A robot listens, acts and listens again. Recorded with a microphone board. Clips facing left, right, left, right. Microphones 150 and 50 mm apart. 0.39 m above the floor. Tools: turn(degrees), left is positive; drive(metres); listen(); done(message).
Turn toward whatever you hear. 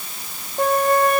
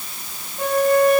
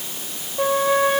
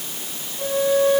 turn(degrees=55)
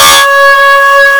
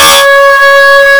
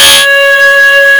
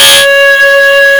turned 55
done("Found it: a flute, straight ahead.")